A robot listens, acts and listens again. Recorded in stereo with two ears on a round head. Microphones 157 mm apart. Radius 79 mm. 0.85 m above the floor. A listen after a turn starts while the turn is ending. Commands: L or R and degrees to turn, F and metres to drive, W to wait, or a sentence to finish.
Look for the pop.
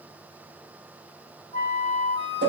W
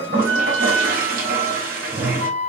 W
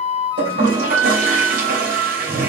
I can't make out a pop, only a toilet flushing and a flute.